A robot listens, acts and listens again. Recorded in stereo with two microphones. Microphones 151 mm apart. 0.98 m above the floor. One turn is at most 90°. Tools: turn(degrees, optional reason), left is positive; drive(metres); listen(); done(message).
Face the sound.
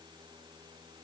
listen()
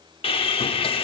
turn(degrees=35, reason="The sawing: about 35° left or 145° left.")
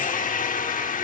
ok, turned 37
turn(degrees=90, reason="So it is at 100° left.")
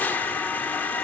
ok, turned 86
turn(degrees=15, reason="The sawing is now 15° left.")
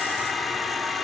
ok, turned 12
done("Facing the sawing, under 1 m away.")